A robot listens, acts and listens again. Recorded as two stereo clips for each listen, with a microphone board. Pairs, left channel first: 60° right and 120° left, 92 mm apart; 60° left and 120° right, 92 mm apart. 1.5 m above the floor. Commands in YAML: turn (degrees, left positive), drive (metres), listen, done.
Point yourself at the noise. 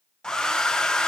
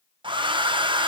turn: -145
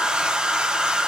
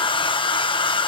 turn: 40
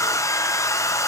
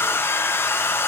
done: "Facing the hair dryer."